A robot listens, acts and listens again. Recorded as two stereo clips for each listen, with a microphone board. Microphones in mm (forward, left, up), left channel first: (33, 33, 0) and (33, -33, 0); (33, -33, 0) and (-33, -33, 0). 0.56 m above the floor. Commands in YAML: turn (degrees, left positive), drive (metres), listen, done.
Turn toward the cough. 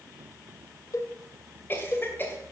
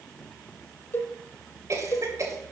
turn: 145
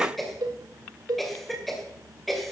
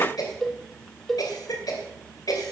done: "Facing the cough."